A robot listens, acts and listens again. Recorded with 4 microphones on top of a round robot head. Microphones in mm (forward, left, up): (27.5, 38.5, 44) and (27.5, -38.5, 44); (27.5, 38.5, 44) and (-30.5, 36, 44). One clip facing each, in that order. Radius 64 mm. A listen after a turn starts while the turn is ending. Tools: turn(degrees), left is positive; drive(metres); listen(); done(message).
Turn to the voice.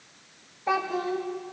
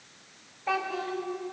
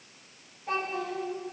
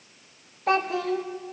turn(degrees=165)
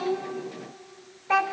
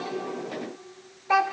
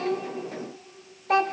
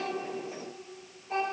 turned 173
turn(degrees=-10)
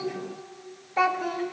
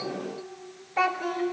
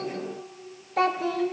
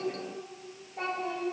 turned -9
done("Facing the child speaking.")